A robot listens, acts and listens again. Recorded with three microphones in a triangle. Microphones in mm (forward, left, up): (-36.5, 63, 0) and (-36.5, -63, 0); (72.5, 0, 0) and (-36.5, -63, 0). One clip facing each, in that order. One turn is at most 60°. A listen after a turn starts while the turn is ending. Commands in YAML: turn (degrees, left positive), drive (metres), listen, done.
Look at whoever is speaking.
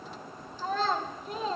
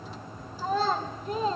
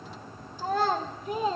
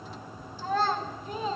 done: "Facing the child speaking, 2 to 4 m away."